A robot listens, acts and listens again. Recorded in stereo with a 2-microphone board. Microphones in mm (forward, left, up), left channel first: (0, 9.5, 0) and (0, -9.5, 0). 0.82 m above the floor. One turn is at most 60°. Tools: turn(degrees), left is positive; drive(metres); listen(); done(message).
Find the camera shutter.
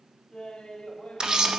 turn(degrees=-50)
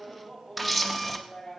done("Facing the camera shutter, under 1 m away.")